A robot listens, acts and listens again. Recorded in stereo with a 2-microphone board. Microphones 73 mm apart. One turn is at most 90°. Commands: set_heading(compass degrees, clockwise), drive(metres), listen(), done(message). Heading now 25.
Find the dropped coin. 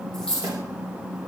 set_heading(355)
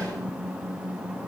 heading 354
listen()
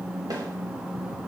done("I heard a dropped coin, but can't make it out now. It was about 20° right or 140° left.")